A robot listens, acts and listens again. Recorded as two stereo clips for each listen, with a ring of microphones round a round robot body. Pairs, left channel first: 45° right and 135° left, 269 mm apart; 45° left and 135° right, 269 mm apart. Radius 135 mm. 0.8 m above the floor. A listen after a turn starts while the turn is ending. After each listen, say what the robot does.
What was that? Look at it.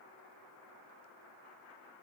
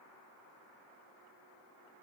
Keep listening.
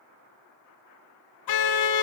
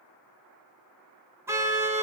Turn 55° right.
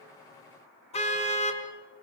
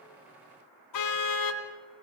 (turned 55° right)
Turn 25° left.
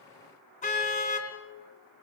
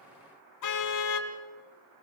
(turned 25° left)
Turn 20° left.
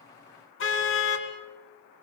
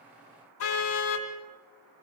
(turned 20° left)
Found it: a car horn, straight ahead, 2 to 4 m away.